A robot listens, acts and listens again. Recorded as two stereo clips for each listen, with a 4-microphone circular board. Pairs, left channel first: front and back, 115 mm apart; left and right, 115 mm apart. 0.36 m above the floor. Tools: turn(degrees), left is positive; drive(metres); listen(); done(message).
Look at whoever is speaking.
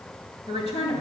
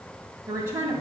turn(degrees=-25)
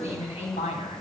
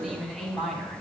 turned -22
done("Facing the woman speaking.")